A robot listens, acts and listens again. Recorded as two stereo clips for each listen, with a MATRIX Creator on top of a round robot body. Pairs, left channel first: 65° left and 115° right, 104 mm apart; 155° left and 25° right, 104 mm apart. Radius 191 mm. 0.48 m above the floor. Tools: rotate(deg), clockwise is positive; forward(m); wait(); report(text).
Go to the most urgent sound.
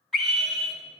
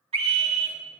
rotate(20)
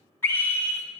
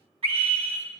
forward(1.0)
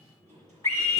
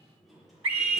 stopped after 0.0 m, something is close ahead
report("Something is in my way. I am facing the scream but have not reached it.")